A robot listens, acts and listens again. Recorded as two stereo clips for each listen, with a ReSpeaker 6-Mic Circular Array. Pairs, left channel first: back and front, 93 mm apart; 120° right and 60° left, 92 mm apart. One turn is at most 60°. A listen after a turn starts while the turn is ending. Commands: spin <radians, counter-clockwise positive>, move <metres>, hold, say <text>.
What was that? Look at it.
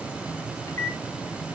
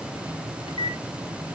spin -1.05
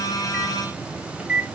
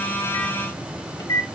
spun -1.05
spin -1.05
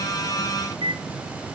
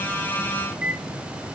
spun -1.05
spin -0.35
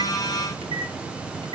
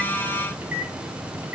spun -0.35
spin -0.17
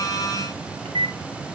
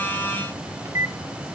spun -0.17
say Facing the microwave, 1 to 2 m away.